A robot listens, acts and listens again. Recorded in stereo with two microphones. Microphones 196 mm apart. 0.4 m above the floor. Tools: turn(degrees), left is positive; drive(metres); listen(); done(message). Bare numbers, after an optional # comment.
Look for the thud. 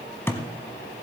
turn(30)
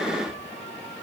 listen()
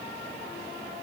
done("I heard a thud, but can't make it out now. It was about 20° right or 140° left.")